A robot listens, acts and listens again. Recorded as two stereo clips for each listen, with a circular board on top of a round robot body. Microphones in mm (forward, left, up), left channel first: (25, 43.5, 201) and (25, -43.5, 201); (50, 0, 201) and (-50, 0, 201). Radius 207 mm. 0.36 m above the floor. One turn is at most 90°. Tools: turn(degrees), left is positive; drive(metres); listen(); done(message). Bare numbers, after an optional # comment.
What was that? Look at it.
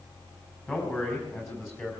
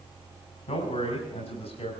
# The man speaking: 30° left.
turn(30)
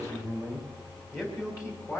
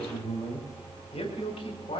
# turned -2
# The man speaking is now 35° left.
turn(35)
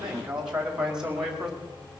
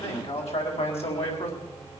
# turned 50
done("Found it: a man speaking, straight ahead.")